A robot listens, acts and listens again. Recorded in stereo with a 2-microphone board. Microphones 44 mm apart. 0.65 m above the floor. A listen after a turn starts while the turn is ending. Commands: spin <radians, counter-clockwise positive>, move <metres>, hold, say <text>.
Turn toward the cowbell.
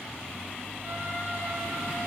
hold
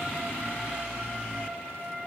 hold
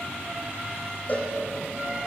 spin 0.61
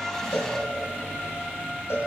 spin 2.01
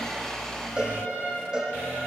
spin -0.26
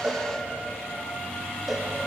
hold
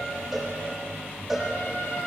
say Facing the cowbell, over 4 m away.